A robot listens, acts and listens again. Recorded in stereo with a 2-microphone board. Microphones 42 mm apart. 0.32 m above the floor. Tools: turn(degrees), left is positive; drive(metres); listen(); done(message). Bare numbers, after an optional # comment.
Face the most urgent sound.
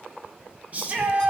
# The shout: about 35° right or 145° right.
turn(-35)
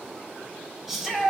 # So it is at 10° right.
turn(-10)
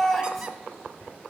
done("Facing the shout.")